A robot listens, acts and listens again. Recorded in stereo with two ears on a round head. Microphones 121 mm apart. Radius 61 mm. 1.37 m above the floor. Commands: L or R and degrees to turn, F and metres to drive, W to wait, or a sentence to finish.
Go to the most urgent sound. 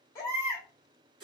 L25
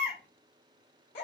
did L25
L125
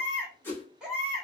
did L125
R10
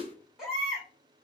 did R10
F1.0
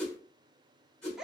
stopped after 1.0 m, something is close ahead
I am next to the baby crying.